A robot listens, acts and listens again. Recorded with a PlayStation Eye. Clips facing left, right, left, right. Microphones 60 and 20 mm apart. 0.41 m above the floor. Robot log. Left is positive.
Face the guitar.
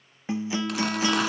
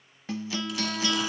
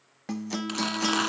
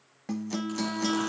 note: The guitar: about 20° left or 160° left.
cmd yaw +20
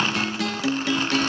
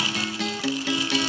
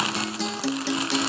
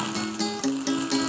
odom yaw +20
end: Facing the guitar.